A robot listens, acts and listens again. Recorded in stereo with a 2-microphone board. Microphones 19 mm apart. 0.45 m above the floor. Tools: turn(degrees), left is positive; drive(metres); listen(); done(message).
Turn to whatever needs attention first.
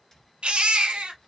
turn(degrees=-90)
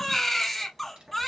done("Facing the baby crying, 1 to 2 m away.")